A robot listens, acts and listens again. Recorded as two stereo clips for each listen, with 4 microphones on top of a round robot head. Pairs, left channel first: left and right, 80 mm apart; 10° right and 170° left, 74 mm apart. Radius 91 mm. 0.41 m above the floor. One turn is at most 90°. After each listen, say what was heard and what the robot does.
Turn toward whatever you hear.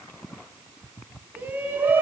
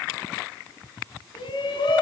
The shout: 20° right. Turn 20° right.
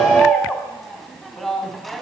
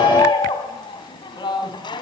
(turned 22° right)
Found it: a shout, straight ahead, 2 to 4 m away.